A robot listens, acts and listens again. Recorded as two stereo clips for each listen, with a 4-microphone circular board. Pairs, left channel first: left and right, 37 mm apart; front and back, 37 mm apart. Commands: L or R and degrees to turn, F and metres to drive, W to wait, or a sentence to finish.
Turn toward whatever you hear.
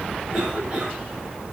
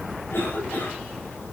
R20
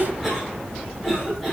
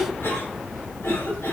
Found it: a cough, straight ahead, over 4 m away.